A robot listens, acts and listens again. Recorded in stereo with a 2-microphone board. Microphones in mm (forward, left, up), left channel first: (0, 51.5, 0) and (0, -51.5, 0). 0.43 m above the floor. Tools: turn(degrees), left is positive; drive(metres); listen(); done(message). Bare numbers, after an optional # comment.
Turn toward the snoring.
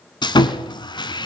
listen()
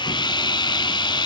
listen()
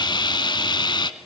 done("I can't make out snoring, only sawing.")